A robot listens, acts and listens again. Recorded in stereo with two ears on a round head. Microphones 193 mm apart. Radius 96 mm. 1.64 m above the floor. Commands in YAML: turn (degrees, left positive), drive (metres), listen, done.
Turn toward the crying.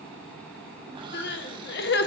turn: 50
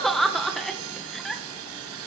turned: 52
done: "Found it: crying, straight ahead."